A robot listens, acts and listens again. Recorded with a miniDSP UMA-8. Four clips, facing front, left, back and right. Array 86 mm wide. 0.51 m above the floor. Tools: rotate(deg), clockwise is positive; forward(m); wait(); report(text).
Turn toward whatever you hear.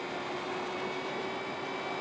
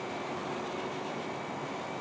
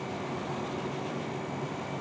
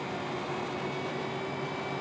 wait()
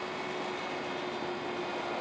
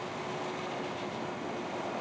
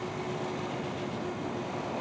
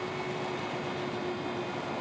wait()
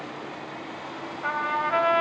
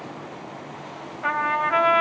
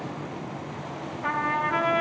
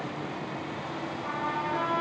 rotate(-70)
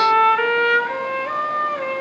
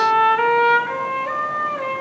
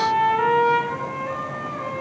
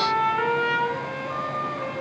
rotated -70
rotate(-15)
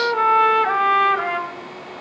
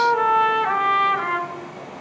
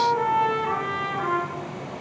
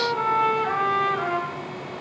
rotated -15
report("Facing the trumpet, 2 to 4 m away.")